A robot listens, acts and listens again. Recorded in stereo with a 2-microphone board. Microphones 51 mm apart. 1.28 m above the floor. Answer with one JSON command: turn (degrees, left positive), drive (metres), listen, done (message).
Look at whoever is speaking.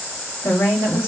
{"turn": 90}
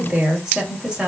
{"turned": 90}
{"turn": -15}
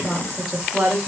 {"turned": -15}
{"turn": -10}
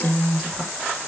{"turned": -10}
{"done": "Found it: a woman speaking, straight ahead, 2 to 4 m away."}